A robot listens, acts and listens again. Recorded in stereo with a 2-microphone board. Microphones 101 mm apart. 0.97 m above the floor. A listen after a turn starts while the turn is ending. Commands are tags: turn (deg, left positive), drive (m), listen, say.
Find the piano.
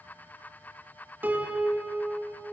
<turn deg="-20"/>
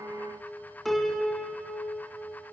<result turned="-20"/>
<say>Facing the piano, 2 to 4 m away.</say>